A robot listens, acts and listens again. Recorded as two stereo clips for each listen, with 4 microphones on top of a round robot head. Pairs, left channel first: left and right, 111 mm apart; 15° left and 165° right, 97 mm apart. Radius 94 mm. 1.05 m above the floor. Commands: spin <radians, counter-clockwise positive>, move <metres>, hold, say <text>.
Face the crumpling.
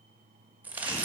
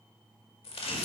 spin -0.26
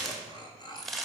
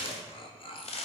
say Found it: crumpling, straight ahead.